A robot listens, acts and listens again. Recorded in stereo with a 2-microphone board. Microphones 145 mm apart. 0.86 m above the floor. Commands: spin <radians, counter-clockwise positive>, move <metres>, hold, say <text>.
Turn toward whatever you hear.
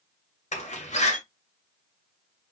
spin 1.05
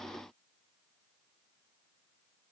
hold
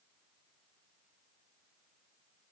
say I heard a door slam, but can't make it out now. It was about straight ahead or 60° left.